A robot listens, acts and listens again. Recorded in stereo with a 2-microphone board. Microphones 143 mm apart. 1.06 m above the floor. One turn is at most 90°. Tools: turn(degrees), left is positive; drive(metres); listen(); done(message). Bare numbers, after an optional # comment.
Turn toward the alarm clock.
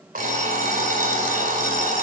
turn(-90)
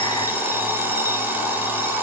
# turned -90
# So it is at 15° right.
turn(-15)
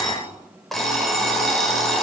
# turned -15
done("Found it: an alarm clock, straight ahead.")